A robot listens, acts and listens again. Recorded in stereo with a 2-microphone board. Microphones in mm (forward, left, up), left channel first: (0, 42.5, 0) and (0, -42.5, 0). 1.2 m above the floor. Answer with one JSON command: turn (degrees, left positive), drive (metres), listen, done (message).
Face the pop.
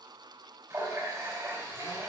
{"listen": true}
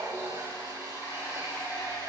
{"listen": true}
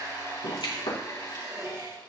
{"turn": 90}
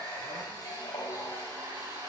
{"done": "I heard a pop from this way, but can't make it out now."}